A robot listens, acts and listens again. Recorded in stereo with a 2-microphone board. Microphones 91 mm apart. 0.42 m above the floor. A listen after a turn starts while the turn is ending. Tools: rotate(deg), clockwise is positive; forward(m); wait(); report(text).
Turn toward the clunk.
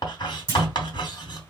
rotate(30)
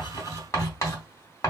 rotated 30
wait()
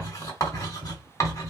report("I heard a clunk, but can't make it out now. It was about straight ahead or 120° right.")